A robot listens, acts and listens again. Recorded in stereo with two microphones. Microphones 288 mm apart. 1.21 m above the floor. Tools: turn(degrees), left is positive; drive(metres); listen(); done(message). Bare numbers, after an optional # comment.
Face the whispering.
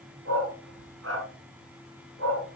listen()
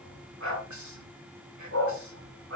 turn(-90)
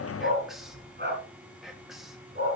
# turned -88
done("Facing the whispering, 2 to 4 m away.")